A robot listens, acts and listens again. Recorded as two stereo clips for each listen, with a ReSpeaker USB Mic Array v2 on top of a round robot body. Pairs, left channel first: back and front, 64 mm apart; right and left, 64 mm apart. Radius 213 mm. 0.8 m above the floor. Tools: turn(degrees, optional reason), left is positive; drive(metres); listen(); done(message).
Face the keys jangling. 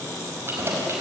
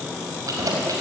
turn(degrees=50, reason="The keys jangling: 50° left.")
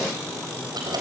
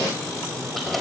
done("Facing the keys jangling.")